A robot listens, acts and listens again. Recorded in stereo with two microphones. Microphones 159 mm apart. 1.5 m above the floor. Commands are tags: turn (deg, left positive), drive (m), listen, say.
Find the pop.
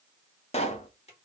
<turn deg="40"/>
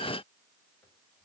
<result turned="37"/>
<listen/>
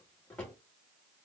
<say>I heard a pop, but can't make it out now. It was about 5° left or 100° left.</say>